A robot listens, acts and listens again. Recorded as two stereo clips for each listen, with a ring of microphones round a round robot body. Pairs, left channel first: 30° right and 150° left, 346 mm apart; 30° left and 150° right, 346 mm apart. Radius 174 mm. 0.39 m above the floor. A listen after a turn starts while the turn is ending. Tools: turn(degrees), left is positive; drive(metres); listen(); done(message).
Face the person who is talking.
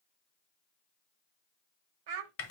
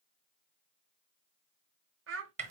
turn(degrees=155)
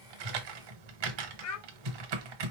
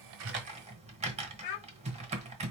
turn(degrees=15)
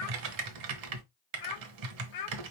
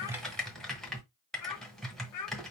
done("Facing the child speaking, 1 to 2 m away.")